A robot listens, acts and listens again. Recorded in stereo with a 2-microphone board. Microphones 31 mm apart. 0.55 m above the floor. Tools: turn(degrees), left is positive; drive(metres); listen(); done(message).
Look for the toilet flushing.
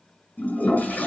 turn(degrees=60)
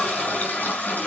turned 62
turn(degrees=55)
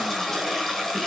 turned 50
done("Facing the toilet flushing, over 4 m away.")